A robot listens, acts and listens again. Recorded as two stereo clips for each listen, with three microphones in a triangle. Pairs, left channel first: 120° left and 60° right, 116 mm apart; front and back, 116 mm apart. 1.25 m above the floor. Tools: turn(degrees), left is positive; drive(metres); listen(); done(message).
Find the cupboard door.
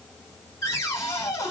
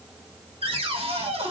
turn(degrees=180)
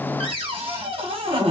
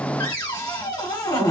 turn(degrees=-45)
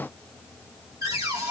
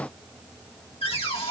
turn(degrees=-10)
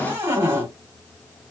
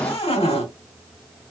done("Facing the cupboard door.")